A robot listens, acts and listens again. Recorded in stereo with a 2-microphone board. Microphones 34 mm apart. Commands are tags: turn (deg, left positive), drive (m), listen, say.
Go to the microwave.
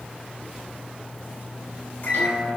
<turn deg="75"/>
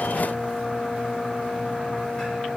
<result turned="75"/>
<turn deg="30"/>
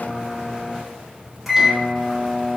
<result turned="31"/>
<drive m="1.0"/>
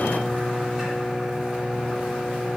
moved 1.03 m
<drive m="1.0"/>
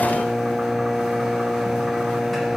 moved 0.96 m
<drive m="1.0"/>
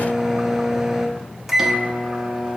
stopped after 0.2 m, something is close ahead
<say>I am next to the microwave.</say>